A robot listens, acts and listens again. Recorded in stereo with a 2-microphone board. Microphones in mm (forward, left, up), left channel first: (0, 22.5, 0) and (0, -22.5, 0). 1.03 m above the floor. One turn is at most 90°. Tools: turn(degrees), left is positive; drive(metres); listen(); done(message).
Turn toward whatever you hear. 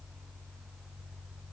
listen()
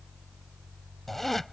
turn(degrees=30)
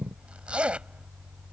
turn(degrees=-25)
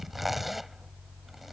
done("Found it: a zipper, straight ahead.")